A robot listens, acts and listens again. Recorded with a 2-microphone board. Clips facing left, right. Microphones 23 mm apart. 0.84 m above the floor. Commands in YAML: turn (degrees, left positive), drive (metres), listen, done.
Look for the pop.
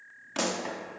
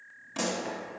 turn: 35
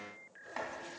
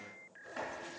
listen: true
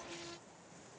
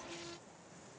done: "I heard a pop, but can't make it out now. It was about straight ahead or 110° left."